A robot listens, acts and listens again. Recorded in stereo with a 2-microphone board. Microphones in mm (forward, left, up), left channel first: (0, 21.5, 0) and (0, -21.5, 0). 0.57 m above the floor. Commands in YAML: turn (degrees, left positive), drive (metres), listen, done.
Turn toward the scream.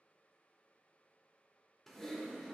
listen: true
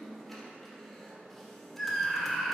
turn: 30
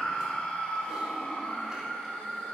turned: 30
turn: 150
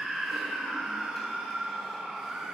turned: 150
turn: -15
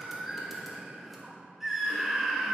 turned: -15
done: "Found it: a scream, straight ahead."